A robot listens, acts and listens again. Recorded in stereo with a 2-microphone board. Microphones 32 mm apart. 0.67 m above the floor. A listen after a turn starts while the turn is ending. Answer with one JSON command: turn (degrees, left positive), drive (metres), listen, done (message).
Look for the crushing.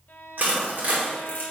{"turn": -65}
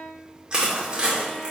{"turn": -35}
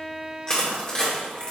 {"turn": 25}
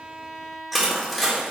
{"done": "Facing the crushing, 2 to 4 m away."}